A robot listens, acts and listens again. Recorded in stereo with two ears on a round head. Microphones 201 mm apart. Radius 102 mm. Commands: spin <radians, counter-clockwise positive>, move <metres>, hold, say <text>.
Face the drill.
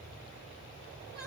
hold
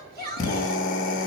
spin 0.61
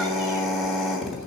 say Found it: a drill, straight ahead, 2 to 4 m away.